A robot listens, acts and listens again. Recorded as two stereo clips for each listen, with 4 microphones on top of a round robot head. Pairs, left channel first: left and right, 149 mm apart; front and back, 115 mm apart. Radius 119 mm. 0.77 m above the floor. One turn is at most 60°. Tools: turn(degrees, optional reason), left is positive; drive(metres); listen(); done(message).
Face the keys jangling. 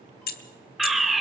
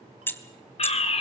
turn(degrees=60, reason="The keys jangling: 75° left.")
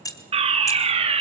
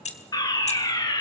turn(degrees=20, reason="The keys jangling is now 20° left.")
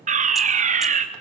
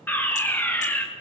listen()
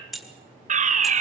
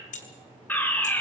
done("Found it: keys jangling, straight ahead, 2 to 4 m away.")